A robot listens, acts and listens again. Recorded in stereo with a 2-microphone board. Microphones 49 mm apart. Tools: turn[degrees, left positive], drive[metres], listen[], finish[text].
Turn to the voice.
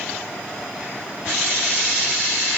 Action: listen[]
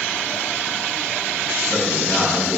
Thought: The man speaking: about 15° left or 165° left.
Action: turn[15]
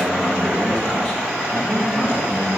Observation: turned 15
Thought: The man speaking: about 25° left or 155° left.
Action: turn[25]
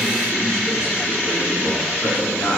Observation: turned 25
Thought: So it is at 130° left.
Action: turn[130]
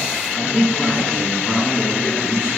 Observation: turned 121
Thought: The man speaking is now 10° left.
Action: turn[10]
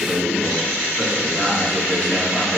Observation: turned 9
Action: finish[Found it: a man speaking, straight ahead.]